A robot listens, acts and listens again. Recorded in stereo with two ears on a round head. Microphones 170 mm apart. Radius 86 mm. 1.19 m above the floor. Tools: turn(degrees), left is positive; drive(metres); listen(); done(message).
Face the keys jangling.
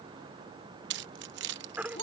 turn(degrees=-60)
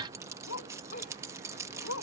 turn(degrees=-15)
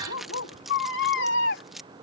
done("Facing the keys jangling.")